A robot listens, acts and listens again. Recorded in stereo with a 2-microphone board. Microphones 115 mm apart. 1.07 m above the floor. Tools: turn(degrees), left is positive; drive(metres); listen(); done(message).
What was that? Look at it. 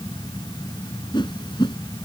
turn(degrees=40)
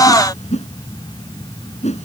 turn(degrees=100)
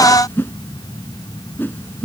turn(degrees=20)
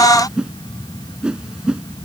done("Found it: a whoosh, straight ahead.")